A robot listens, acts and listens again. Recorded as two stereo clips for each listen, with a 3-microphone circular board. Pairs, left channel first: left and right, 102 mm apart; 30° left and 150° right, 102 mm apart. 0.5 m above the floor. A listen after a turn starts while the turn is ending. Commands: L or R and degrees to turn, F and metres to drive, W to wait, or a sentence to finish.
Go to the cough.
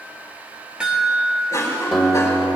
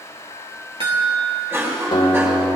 L145
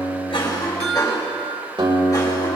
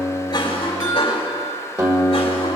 L40
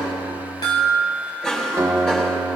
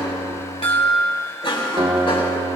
F1.0
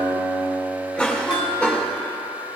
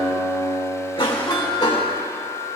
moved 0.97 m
L10
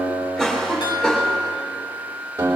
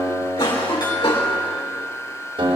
F1.0
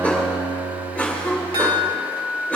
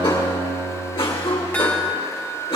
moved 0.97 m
L15
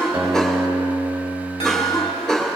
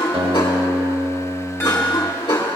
F1.0
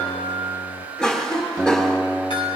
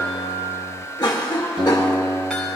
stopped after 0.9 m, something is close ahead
L10
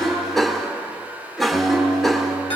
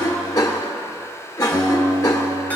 I am next to the cough.